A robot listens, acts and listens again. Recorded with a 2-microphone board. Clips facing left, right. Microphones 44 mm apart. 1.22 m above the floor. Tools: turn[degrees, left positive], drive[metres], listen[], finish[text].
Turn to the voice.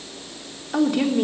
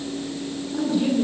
Thought: The woman speaking: about 70° left or 110° left.
Action: turn[70]
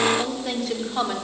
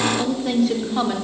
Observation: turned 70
Action: finish[Found it: a woman speaking, straight ahead, over 4 m away.]